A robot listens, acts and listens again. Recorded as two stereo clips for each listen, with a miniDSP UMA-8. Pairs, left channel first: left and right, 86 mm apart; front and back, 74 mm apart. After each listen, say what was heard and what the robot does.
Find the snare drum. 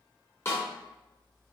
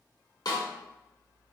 The snare drum: 30° left. Turn 30° left.
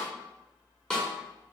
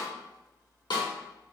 The snare drum is now 10° left. Turn 10° left.
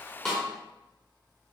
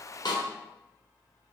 Found it: a snare drum, straight ahead, 1 to 2 m away.